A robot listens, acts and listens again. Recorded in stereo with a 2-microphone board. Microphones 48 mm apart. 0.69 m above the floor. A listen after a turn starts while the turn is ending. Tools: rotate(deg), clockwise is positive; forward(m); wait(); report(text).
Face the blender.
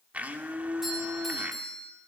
rotate(35)
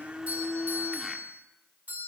report("Facing the blender.")